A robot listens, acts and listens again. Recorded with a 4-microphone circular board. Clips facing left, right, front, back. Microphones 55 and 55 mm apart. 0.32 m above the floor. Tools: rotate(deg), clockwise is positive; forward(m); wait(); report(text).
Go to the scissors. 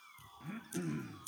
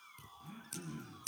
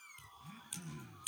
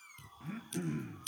rotate(80)
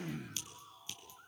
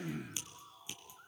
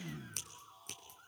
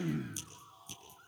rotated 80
rotate(20)
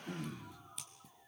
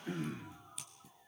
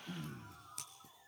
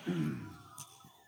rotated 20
forward(1.0)
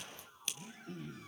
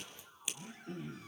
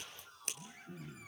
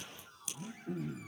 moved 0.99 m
rotate(15)
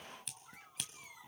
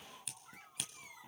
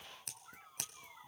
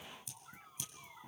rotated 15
forward(1.0)
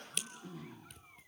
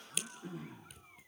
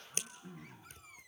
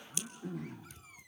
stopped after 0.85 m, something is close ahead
report("I am next to the scissors.")